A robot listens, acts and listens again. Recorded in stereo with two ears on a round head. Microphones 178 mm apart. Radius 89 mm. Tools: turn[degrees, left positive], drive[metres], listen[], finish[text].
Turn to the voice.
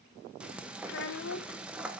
Thought: The child speaking: about 60° left or 120° left.
Action: turn[60]
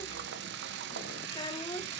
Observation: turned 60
Thought: So it is at 25° left.
Action: turn[25]
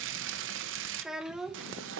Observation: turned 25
Action: finish[Found it: a child speaking, straight ahead, under 1 m away.]